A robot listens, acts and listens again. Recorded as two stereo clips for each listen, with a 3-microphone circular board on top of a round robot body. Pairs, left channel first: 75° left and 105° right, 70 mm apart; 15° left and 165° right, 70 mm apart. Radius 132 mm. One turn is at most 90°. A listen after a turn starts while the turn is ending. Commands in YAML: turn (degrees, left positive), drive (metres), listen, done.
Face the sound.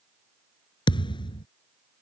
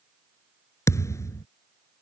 turn: 65
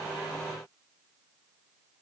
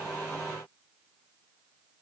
done: "Facing where the thud came from. I can't hear it now."